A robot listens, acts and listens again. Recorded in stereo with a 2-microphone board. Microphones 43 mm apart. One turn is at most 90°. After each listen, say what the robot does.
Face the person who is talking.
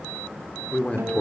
Turn 30° left.
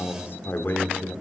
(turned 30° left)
Turn 90° left.
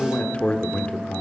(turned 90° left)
Turn 30° left.
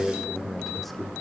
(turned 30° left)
Found it: a man speaking, straight ahead.